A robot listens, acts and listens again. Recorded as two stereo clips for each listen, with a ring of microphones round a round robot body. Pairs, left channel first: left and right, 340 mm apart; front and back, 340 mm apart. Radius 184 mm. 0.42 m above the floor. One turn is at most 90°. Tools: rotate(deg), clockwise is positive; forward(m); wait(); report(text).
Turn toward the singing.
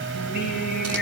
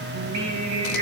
rotate(-90)
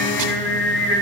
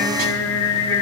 rotate(-80)
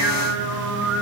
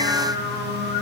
report("Found it: singing, straight ahead, 2 to 4 m away.")